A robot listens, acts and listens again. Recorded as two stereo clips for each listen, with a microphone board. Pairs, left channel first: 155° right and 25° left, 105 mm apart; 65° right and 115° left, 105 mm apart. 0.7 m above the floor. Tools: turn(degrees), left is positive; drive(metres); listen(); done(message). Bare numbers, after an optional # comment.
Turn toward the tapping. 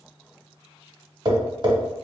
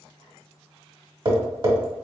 # The tapping: 70° left.
turn(70)
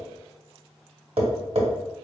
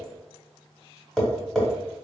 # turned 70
# The tapping is now 20° left.
turn(20)
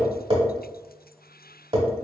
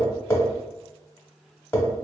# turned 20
done("Facing the tapping, 1 to 2 m away.")